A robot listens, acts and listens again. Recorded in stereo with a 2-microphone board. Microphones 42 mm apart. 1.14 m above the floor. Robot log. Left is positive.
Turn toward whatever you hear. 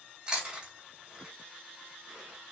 note: The chewing: about 20° right or 160° right.
cmd yaw -20
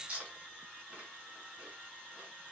note: So it is at 135° right.
cmd yaw -135
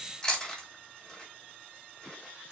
note: The chewing is now 10° left.
cmd yaw +10
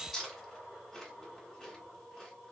end: Found it: chewing, straight ahead.